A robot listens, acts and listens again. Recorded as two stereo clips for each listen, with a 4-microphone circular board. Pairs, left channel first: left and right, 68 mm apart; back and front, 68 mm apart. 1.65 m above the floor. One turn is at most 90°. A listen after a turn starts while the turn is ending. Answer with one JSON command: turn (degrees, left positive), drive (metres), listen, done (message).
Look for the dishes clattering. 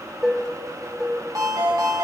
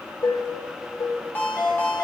{"turn": -90}
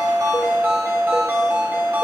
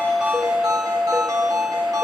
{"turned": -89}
{"turn": -90}
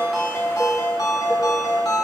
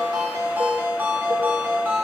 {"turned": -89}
{"listen": true}
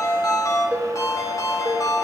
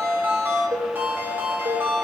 {"done": "Found it: dishes clattering, straight ahead."}